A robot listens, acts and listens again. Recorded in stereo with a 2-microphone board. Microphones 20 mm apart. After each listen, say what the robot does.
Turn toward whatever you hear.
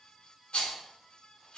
Turn 65° left.
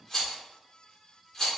Turn 20° left.
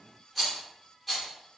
Found it: a rattle, straight ahead.